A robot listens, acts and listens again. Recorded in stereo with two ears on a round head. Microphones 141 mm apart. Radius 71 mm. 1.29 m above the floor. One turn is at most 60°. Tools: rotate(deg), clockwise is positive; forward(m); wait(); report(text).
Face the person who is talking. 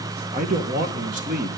rotate(50)
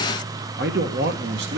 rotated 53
rotate(60)
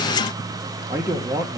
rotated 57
rotate(15)
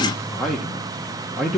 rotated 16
report("Facing the man speaking, 1 to 2 m away.")